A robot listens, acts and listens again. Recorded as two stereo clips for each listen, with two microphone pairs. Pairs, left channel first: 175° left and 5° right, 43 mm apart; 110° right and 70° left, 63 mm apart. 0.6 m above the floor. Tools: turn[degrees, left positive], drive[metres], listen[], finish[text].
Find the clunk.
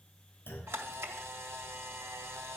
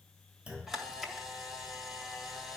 Thought: The clunk: 140° left.
Action: turn[140]
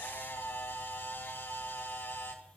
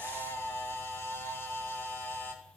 Action: finish[Facing where the clunk came from. I can't hear it now.]